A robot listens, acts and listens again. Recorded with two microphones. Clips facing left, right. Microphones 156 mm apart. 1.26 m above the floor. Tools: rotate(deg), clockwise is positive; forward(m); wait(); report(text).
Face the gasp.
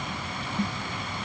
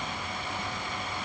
wait()
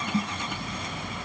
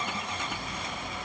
wait()
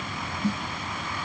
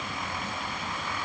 report("I can't make out a gasp, only a snare drum.")